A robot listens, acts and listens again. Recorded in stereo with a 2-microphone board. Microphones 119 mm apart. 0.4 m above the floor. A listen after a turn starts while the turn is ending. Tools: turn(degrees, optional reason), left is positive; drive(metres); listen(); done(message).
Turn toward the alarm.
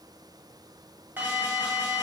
turn(degrees=-15, reason="The alarm: about 15° right or 165° right.")
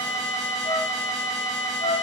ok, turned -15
done("Found it: an alarm, straight ahead.")